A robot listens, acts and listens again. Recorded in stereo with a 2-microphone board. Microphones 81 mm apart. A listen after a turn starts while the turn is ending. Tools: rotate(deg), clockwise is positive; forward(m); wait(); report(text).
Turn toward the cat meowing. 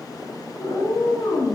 rotate(-65)
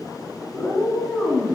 report("Found it: a cat meowing, straight ahead, under 1 m away.")